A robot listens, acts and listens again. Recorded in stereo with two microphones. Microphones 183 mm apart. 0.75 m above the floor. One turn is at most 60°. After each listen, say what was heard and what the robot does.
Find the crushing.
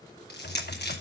The crushing: about 60° left or 120° left. Turn 60° left.
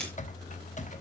Keep listening.
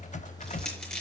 Found it: crushing, straight ahead, over 4 m away.